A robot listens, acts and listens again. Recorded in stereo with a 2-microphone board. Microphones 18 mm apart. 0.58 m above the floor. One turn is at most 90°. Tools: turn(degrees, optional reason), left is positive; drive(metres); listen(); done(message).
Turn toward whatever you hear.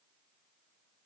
listen()
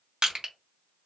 turn(degrees=-50, reason="The crushing: about 50° right or 130° right.")
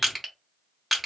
turn(degrees=-10, reason="So it is at 10° right.")
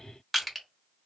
done("Found it: crushing, straight ahead.")